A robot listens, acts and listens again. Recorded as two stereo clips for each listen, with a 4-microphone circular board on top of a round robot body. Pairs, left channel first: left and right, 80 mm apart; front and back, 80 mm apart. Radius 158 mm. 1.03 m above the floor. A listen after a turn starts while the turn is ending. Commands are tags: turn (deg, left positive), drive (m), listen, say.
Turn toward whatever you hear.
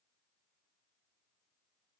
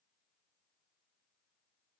<listen/>
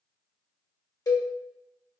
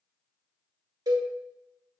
<turn deg="135"/>
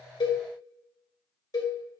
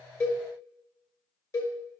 <turn deg="45"/>
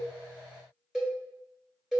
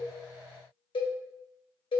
<say>Found it: a cowbell, straight ahead.</say>